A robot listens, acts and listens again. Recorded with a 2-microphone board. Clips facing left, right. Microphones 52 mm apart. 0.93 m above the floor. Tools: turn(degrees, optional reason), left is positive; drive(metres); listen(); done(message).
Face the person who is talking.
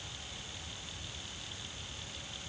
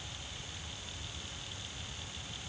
listen()
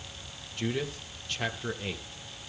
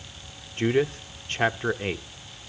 turn(degrees=-40, reason="The man speaking: about 40° right or 140° right.")
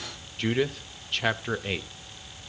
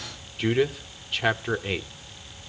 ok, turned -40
done("Facing the man speaking, under 1 m away.")